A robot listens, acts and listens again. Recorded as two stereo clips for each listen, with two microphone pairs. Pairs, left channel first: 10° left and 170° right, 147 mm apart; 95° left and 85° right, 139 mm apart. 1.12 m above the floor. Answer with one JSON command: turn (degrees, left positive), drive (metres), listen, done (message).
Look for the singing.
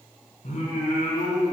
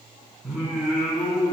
{"done": "Found it: singing, straight ahead, 1 to 2 m away."}